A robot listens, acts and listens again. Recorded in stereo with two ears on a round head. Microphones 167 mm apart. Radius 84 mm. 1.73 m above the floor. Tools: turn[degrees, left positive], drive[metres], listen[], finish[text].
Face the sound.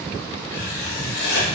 Thought: The writing: about 55° left or 125° left.
Action: turn[55]
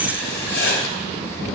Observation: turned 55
Thought: So it is at 65° left.
Action: turn[65]
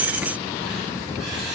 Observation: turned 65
Action: listen[]
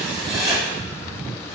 Action: finish[Found it: writing, straight ahead.]